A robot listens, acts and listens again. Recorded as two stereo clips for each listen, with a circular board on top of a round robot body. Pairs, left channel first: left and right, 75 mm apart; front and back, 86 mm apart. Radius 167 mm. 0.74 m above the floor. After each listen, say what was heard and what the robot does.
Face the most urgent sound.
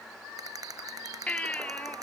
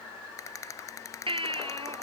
The baby crying: 165° left. Turn 165° left.
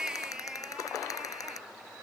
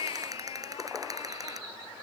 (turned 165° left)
The baby crying is now 10° right. Turn 10° right.
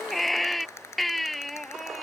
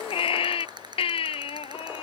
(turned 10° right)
Found it: a baby crying, straight ahead.